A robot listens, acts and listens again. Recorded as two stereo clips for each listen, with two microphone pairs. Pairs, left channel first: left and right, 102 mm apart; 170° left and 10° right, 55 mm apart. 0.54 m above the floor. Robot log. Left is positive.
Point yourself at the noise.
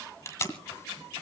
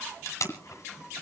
note: The tape being pulled: 150° left.
cmd yaw +150
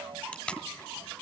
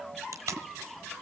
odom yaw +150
note: The tape being pulled is now 10° left.
cmd yaw +10
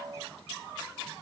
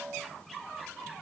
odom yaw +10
cmd idle
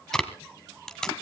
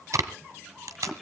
end: Found it: tape being pulled, straight ahead.